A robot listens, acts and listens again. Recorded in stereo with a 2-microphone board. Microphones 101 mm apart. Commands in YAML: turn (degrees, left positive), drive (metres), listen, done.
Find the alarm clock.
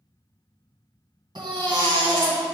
listen: true
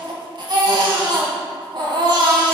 listen: true
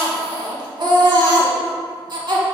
done: "I can't make out an alarm clock to turn to."